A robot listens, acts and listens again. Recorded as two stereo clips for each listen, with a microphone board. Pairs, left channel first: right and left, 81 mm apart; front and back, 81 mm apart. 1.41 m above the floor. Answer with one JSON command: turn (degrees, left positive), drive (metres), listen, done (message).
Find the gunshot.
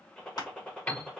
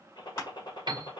{"turn": -10}
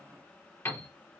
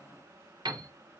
{"done": "Facing where the gunshot came from. I can't hear it now."}